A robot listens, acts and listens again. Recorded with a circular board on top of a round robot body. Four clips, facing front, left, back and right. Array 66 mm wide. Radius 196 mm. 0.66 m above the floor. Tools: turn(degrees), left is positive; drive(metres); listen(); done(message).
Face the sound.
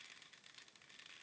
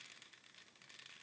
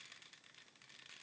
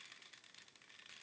listen()
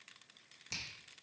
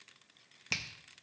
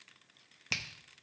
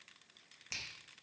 turn(degrees=145)
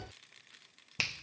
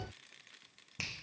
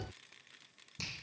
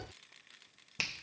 turn(degrees=-20)
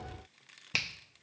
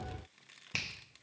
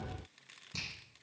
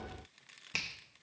done("Found it: a finger snap, straight ahead, 1 to 2 m away.")